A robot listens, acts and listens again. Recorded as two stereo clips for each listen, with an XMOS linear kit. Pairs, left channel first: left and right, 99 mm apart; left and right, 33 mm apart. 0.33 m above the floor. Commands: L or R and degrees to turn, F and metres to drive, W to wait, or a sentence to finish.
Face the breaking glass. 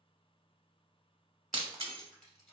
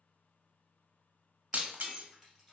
R60
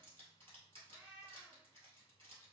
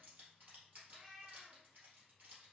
W
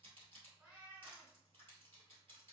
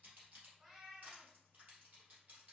I heard breaking glass, but can't make it out now. It was about straight ahead or 60° right.